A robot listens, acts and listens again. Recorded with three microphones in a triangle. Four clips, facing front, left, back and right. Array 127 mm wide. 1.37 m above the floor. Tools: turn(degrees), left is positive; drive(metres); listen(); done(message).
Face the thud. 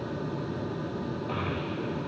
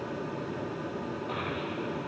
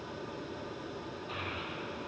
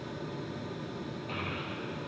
listen()
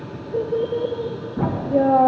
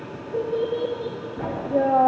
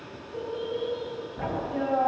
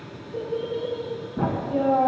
turn(degrees=-40)
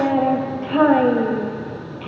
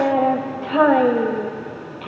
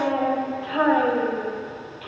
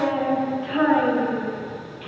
done("Facing where the thud came from. I can't hear it now.")